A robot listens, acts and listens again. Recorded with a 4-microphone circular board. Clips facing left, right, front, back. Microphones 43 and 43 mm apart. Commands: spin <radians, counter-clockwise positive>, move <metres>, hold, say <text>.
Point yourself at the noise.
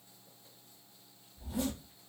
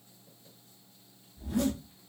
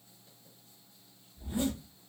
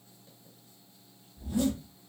spin -1.05
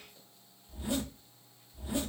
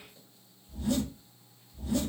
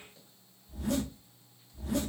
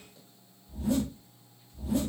spin 0.35
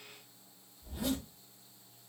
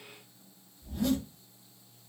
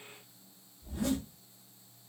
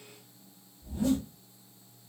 say Facing the zipper, under 1 m away.